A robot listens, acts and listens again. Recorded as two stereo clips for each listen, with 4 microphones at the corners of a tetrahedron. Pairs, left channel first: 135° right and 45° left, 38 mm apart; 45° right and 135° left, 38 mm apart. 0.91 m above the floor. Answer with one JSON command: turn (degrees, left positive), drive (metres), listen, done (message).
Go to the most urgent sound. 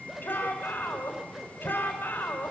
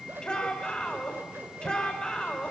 {"turn": -110}
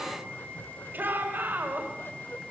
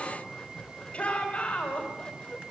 {"turn": 15}
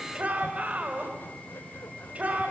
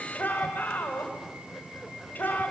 {"drive": 1.0}
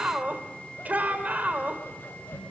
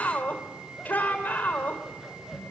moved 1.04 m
{"drive": 1.0}
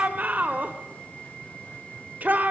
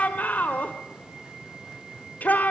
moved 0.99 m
{"drive": 1.0}
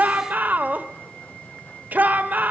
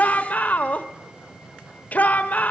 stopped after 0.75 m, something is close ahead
{"done": "Arrived at the shout, straight ahead."}